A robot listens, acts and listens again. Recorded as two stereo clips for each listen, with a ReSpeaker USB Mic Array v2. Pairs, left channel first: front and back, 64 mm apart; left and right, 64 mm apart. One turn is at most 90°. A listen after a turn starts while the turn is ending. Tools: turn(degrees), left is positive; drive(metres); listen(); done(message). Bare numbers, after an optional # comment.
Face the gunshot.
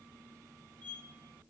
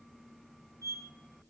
listen()
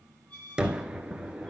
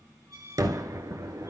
# The gunshot: 105° right.
turn(-90)
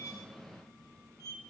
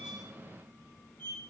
# Nothing new. It was at 15° right.
turn(-15)
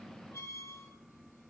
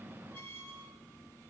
done("Facing where the gunshot came from. I can't hear it now.")